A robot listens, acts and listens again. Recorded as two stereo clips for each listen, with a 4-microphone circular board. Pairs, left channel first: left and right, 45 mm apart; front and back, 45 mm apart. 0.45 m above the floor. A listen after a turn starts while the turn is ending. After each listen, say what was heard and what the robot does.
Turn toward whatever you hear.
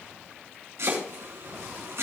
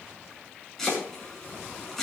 The chopping: 80° right. Turn 80° right.
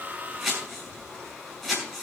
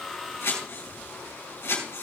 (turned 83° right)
Found it: chopping, straight ahead, over 4 m away.